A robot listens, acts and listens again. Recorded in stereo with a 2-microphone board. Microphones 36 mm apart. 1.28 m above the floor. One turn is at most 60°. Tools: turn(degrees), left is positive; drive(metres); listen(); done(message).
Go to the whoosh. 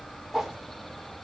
turn(degrees=-30)
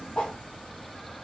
turn(degrees=20)
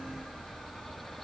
listen()
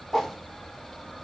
drive(metres=1.0)
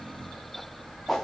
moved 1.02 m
drive(metres=1.0)
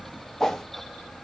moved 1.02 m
turn(degrees=10)
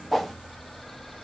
drive(metres=1.0)
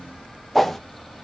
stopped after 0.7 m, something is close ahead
done("I am next to the whoosh.")